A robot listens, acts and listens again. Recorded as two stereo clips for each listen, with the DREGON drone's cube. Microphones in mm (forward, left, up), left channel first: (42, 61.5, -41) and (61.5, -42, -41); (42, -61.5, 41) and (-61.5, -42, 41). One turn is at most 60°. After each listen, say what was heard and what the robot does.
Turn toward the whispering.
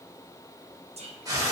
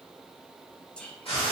The whispering: 90° right. Turn 60° right.
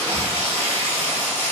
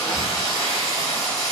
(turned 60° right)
The whispering is now 35° right. Turn 35° right.
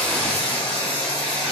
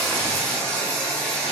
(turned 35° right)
Keep listening.
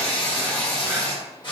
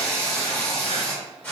Keep listening.
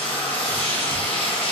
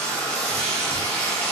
Facing where the whispering came from. I can't hear it now.